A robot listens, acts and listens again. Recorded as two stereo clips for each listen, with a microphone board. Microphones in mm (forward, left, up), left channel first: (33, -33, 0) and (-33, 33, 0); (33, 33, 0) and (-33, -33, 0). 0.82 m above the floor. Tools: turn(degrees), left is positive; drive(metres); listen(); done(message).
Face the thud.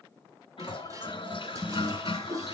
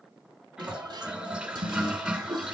turn(degrees=-115)
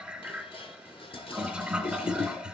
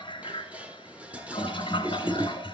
done("I heard a thud from this way, but can't make it out now.")